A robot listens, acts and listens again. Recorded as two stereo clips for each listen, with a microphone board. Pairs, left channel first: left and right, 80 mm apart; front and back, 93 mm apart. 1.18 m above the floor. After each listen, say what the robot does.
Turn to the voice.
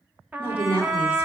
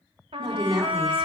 Turn 150° left.
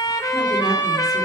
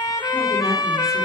Keep listening.
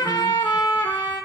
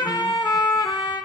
Keep listening.
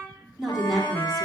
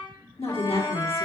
Found it: a woman speaking, straight ahead, 1 to 2 m away.